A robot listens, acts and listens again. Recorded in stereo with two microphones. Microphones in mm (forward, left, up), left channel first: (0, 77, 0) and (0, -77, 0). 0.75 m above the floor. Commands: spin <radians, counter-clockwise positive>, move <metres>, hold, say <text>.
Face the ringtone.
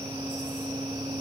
hold
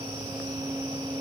hold
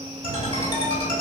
spin 0.44
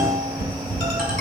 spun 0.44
say Found it: a ringtone, straight ahead, 2 to 4 m away.